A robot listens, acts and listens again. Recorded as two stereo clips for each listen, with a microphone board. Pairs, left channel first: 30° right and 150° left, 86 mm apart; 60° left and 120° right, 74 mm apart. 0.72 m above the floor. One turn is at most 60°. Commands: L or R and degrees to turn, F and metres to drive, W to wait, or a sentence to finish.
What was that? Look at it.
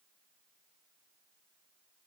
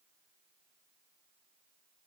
W
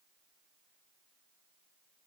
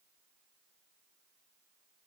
W
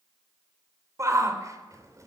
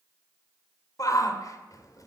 L60
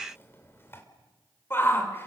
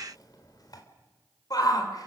L30
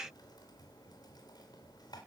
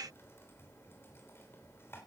W
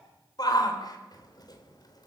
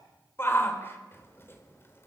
Found it: a shout, straight ahead.